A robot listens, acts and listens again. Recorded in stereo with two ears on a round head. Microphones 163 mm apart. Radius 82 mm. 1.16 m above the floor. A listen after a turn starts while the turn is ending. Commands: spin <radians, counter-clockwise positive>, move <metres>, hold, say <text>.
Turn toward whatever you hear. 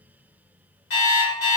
spin 1.22
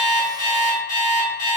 spin 0.70
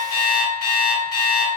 spin 0.44
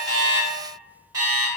spin -0.35
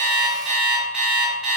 say Found it: an alarm clock, straight ahead, 1 to 2 m away.